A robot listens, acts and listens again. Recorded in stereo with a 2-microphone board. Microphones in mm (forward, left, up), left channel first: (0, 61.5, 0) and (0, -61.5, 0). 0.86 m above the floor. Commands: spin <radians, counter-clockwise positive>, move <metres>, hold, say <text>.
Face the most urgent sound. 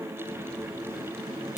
hold
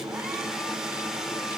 hold
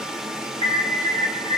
spin 0.87
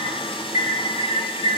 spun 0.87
spin 1.40
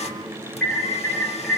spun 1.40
say Found it: an alarm, straight ahead, over 4 m away.